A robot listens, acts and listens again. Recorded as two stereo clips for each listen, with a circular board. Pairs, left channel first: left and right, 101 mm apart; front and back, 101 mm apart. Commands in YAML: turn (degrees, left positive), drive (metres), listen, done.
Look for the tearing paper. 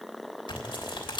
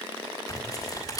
turn: 55
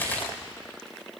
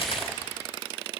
turn: 20
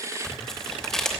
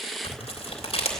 done: "Facing the tearing paper, 2 to 4 m away."